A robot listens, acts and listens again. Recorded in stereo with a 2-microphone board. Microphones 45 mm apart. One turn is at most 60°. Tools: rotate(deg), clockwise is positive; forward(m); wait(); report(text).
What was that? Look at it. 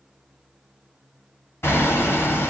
rotate(-60)
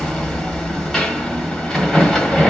rotate(-10)
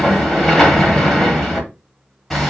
report("Facing the hammering.")